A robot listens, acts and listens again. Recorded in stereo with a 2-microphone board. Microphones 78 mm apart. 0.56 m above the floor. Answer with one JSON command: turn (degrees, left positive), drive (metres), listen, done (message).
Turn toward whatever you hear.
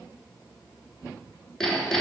{"turn": 30}
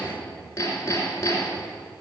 {"turn": 145}
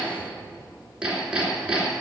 {"turn": -10}
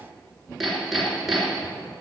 {"done": "Facing the hammering, 2 to 4 m away."}